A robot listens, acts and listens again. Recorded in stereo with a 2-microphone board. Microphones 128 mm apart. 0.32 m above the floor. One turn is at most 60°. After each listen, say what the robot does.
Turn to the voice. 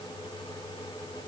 Keep listening.
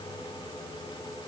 Keep listening.
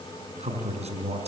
Turn 60° right.
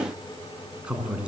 Turn 10° right.
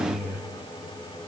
Facing the man speaking, 2 to 4 m away.